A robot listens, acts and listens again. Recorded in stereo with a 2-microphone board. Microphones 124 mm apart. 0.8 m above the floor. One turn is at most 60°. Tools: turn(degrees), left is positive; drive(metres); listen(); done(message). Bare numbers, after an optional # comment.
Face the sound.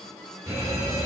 # The alarm: about 25° right or 155° right.
turn(-25)
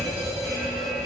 done("Facing the alarm, 1 to 2 m away.")